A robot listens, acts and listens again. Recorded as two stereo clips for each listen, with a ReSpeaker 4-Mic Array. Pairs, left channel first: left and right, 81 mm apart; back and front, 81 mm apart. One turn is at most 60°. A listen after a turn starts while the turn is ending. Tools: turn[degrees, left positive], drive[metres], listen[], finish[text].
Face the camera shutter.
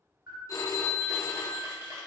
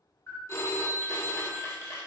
Thought: The camera shutter: 130° right.
Action: turn[-60]
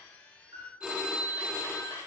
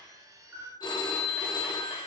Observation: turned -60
Thought: The camera shutter is now 65° right.
Action: turn[-60]
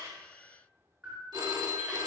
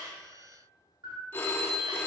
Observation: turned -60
Thought: The camera shutter is now 20° right.
Action: turn[-20]
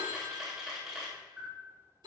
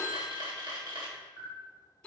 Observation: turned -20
Action: finish[Facing the camera shutter.]